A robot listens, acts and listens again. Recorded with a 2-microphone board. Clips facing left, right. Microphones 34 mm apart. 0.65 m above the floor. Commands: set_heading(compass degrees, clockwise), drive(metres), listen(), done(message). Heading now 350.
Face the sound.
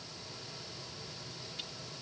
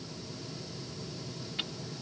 set_heading(35)
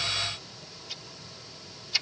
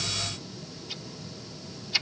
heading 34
set_heading(44)
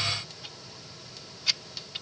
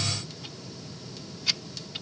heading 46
done("Found it: ticking, straight ahead.")